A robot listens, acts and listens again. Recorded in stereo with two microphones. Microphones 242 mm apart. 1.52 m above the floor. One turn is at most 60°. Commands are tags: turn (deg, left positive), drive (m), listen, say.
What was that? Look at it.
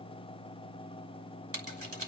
<turn deg="-60"/>
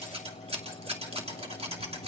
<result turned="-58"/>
<turn deg="-25"/>
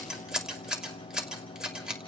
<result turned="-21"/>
<say>Found it: scissors, straight ahead.</say>